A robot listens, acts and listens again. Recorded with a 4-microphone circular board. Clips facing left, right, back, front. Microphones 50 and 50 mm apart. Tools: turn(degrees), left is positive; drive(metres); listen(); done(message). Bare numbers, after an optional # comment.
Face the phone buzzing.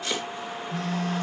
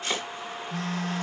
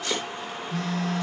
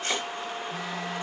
# The phone buzzing: 80° right.
turn(-80)
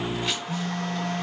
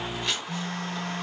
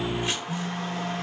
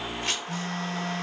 # The phone buzzing is now 30° right.
turn(-30)
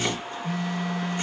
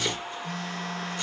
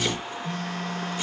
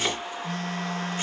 # The phone buzzing is now 10° left.
turn(10)
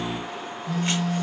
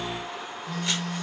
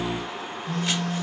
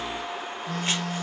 done("Facing the phone buzzing, 1 to 2 m away.")